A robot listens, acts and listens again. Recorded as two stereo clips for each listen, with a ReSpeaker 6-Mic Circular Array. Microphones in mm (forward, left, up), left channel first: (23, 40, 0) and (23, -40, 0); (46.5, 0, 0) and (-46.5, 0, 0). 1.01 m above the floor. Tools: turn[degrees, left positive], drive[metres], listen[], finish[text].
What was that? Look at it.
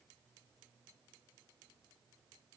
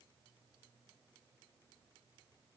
Action: listen[]
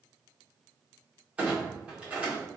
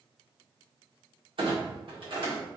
Thought: The clunk: 165° right.
Action: turn[-165]
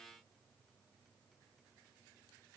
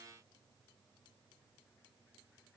Action: finish[I heard a clunk from this way, but can't make it out now.]